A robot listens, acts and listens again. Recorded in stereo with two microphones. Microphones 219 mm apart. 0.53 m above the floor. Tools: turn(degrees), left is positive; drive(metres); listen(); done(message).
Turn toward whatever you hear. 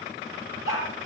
turn(degrees=75)
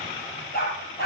turn(degrees=45)
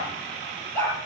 turn(degrees=10)
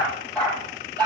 turn(degrees=10)
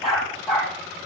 done("Found it: a dog barking, straight ahead.")